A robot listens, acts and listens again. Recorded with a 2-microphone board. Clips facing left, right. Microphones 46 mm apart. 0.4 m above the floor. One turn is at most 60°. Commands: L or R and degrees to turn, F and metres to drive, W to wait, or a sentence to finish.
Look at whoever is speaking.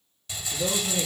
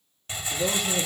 R35
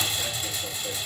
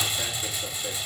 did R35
W
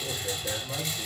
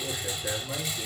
R60
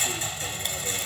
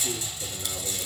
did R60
R50
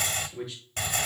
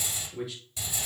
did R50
Found it: a man speaking, straight ahead, over 4 m away.